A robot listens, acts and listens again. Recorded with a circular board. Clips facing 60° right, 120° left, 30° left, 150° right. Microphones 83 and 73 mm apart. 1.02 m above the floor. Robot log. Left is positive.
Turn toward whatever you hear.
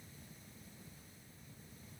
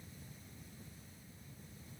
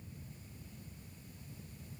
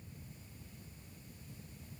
cmd idle
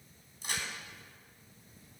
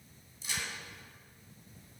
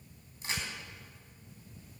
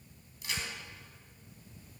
note: The crack: 25° right.
cmd yaw -25
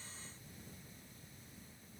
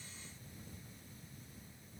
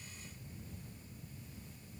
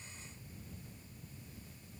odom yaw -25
end: I heard a crack from this way, but can't make it out now.